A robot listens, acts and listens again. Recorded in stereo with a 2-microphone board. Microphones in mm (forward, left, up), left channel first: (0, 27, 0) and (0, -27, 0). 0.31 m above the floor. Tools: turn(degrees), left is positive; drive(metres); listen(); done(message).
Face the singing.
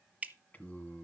turn(degrees=30)
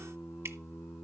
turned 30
turn(degrees=125)
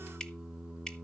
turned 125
turn(degrees=-15)
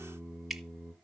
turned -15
done("Found it: singing, straight ahead.")